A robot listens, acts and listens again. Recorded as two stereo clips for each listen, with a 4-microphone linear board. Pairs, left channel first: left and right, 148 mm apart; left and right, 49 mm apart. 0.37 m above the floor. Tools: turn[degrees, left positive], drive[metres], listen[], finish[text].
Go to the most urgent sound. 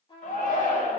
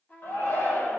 Thought: The shout: about 70° left or 110° left.
Action: turn[70]
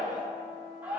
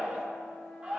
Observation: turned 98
Thought: So it is at 15° right.
Action: turn[-15]
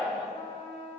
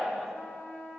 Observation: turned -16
Action: drive[1.0]
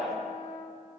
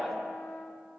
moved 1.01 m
Action: drive[1.0]
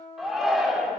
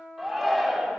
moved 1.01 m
Action: drive[1.0]
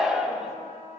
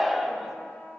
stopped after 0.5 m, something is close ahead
Thought: The shout is now 10° right.
Action: turn[-10]
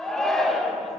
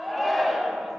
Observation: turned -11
Action: finish[Arrived at the shout, straight ahead.]